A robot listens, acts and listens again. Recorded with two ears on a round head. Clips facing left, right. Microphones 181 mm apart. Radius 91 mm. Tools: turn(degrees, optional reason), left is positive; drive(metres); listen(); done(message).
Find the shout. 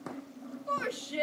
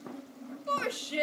turn(degrees=-35, reason="The shout: about 35° right or 145° right.")
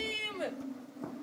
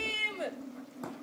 done("Facing the shout, 2 to 4 m away.")